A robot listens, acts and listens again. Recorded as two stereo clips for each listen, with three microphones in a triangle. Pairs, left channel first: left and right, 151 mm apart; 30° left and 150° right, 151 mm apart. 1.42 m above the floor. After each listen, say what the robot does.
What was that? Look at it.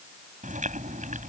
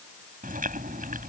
Turn 125° right.
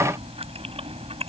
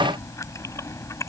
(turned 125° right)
Turn 40° right.
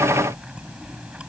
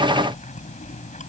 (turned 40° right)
Found it: chewing, straight ahead.